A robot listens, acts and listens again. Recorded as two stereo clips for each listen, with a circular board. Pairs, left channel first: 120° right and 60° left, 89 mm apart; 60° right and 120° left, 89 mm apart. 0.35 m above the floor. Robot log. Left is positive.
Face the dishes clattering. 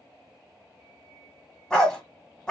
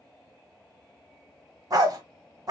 cmd idle
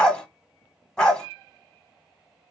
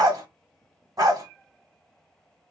cmd idle
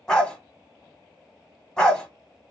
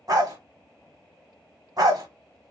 end: I can't make out dishes clattering, only a dog barking.